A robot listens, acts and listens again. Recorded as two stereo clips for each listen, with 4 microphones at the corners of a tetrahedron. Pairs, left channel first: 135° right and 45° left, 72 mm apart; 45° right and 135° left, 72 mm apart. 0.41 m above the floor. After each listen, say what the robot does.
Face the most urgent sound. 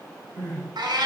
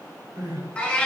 Turn 125° left.
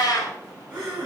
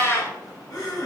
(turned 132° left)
Turn 10° right.
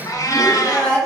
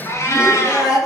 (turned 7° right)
Found it: crying, straight ahead.